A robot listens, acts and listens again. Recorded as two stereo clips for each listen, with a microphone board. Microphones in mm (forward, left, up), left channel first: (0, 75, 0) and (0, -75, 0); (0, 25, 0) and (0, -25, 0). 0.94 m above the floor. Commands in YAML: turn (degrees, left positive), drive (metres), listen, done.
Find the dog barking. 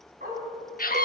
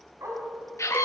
turn: -75
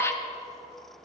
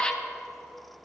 listen: true
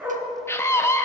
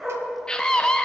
turn: -10
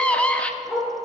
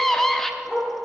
done: "Found it: a dog barking, straight ahead, over 4 m away."